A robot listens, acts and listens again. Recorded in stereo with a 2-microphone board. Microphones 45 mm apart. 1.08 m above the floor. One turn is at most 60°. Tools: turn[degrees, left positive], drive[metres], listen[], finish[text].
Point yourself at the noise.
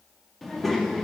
Action: turn[30]
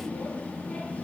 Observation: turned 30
Thought: So it is at 145° left.
Action: turn[60]
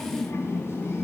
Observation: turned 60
Thought: The child speaking is now 95° left.
Action: turn[60]
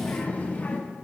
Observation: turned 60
Thought: The child speaking is now 40° left.
Action: turn[40]
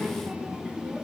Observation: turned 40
Thought: The child speaking is now 15° right.
Action: turn[-15]
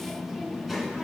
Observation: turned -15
Action: finish[Facing the child speaking, under 1 m away.]